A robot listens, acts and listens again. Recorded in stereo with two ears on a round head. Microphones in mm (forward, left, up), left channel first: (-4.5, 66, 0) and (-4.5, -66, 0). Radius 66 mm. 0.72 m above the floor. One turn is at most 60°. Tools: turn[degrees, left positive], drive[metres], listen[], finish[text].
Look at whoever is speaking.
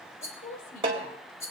Thought: The woman speaking: about 65° left or 115° left.
Action: turn[60]
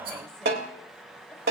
Action: listen[]
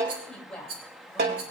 Action: finish[Found it: a woman speaking, straight ahead.]